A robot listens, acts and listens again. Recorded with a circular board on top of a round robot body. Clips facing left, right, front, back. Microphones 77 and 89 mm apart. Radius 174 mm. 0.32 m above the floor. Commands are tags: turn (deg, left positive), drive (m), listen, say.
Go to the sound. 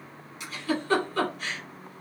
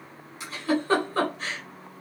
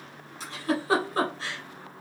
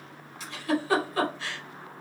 <turn deg="-45"/>
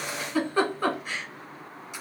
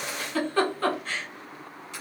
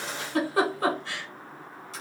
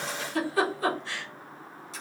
<turn deg="15"/>
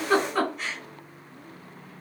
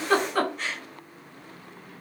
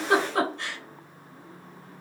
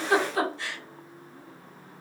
<drive m="1.0"/>
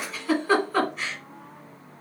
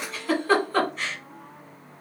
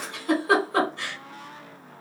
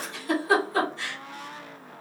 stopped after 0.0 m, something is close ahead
<say>Something is in my way. I am facing the giggle but have not reached it.</say>